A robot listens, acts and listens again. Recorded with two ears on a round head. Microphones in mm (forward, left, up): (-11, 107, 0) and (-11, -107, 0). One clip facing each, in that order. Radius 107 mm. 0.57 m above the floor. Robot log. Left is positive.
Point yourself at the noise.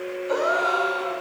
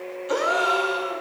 note: The gasp: about 40° right or 140° right.
cmd yaw -40
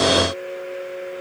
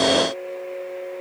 cmd idle
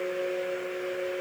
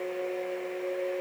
end: I heard a gasp, but can't make it out now. It was about straight ahead or 100° right.